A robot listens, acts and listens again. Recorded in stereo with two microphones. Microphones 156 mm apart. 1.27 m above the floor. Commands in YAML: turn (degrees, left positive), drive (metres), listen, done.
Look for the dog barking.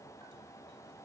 listen: true
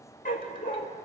turn: 60
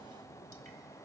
listen: true
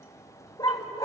turn: 25
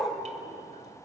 done: "Facing the dog barking, 2 to 4 m away."